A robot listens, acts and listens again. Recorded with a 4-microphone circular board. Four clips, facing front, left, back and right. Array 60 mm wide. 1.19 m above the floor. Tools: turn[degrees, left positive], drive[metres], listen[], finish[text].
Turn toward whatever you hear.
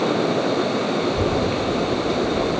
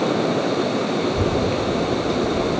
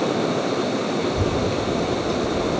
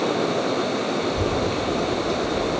Thought: The child speaking: 160° left.
Action: turn[160]
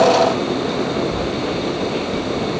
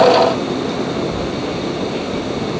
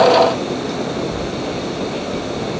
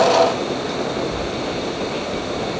Action: finish[Found it: a child speaking, straight ahead, 2 to 4 m away.]